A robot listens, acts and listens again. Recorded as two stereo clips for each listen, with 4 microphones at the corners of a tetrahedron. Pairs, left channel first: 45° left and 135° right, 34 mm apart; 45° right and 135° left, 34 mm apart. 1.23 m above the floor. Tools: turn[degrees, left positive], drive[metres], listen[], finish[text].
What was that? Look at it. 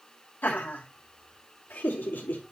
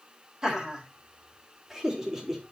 Thought: The laughter: 55° left.
Action: turn[55]
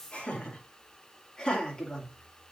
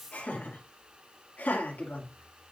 Thought: The laughter is now 25° right.
Action: turn[-25]
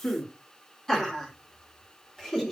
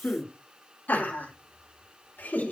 Thought: The laughter is now 35° right.
Action: turn[-35]
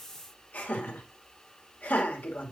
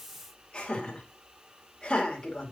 Thought: The laughter is now 20° left.
Action: turn[20]
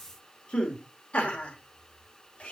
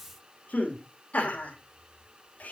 Action: finish[Found it: laughter, straight ahead, 2 to 4 m away.]